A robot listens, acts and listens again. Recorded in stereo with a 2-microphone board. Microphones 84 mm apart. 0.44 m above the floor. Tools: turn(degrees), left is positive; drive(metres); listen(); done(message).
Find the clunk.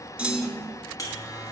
turn(degrees=-30)
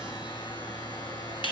listen()
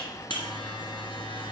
done("I heard a clunk, but can't make it out now. It was about 20° left or 140° right.")